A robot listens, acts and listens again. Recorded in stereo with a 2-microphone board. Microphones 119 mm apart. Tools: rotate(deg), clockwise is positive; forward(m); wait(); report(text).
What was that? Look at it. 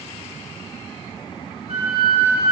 rotate(55)
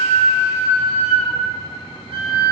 rotate(65)
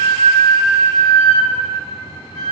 rotate(-10)
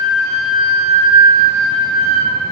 report("Facing the flute.")